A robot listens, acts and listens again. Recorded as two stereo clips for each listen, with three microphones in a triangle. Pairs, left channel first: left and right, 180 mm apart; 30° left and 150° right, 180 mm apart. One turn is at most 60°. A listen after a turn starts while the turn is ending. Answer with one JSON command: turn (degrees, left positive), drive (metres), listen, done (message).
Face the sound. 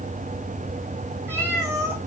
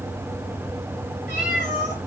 {"turn": -15}
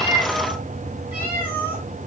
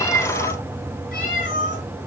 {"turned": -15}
{"turn": -15}
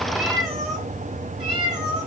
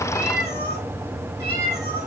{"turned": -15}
{"done": "Found it: a cat meowing, straight ahead, over 4 m away."}